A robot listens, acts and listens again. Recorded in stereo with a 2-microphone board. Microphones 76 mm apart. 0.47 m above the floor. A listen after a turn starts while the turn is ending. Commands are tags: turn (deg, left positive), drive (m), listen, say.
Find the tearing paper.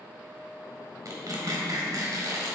<turn deg="-50"/>
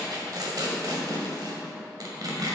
<turn deg="-70"/>
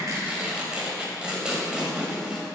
<turn deg="-15"/>
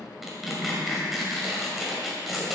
<say>Facing the tearing paper, 1 to 2 m away.</say>